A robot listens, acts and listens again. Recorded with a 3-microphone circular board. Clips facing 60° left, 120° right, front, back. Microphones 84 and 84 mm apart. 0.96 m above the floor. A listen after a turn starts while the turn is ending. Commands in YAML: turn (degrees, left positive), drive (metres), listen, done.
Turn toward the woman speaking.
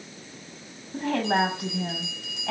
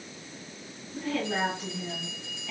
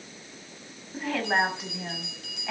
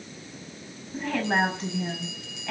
turn: 80
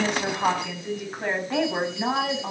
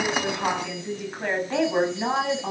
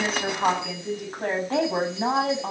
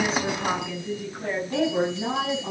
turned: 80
turn: -35
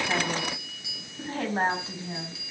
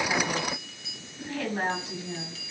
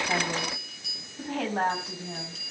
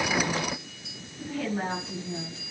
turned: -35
done: "Found it: a woman speaking, straight ahead, over 4 m away."